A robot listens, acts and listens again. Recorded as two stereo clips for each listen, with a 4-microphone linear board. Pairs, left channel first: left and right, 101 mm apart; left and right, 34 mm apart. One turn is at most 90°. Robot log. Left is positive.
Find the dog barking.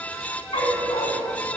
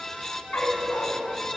note: The dog barking: about 70° left or 110° left.
cmd yaw +70
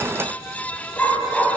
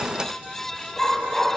end: Facing the dog barking, 2 to 4 m away.